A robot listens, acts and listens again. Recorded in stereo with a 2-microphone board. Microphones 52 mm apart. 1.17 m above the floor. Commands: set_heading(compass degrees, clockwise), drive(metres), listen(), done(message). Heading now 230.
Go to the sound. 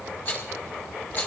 set_heading(190)
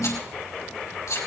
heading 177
set_heading(92)
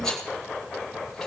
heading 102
set_heading(92)
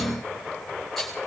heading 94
drive(1.0)
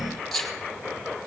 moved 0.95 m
drive(1.0)
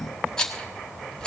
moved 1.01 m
set_heading(79)
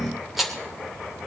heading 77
drive(1.0)
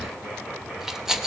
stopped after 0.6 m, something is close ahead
set_heading(87)
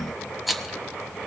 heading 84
done("I am next to the rattle.")